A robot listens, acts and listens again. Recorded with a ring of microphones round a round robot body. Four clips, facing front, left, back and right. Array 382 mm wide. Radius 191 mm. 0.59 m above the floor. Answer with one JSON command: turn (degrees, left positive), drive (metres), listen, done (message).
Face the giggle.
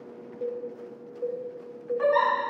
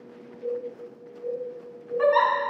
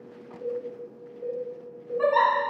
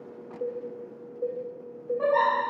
{"turn": 95}
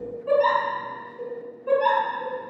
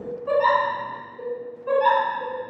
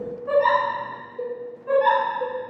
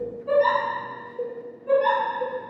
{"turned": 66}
{"turn": 25}
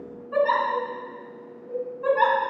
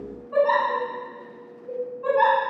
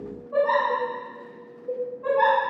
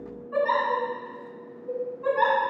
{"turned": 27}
{"done": "Facing the giggle, 1 to 2 m away."}